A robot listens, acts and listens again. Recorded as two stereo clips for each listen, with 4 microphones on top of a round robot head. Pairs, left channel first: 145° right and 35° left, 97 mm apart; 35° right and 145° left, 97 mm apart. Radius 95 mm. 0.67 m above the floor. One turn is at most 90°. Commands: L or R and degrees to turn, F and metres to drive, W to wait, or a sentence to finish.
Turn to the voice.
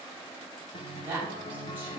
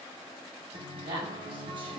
L90
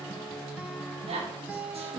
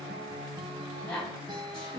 L45
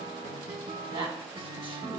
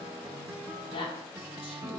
Facing the woman speaking, over 4 m away.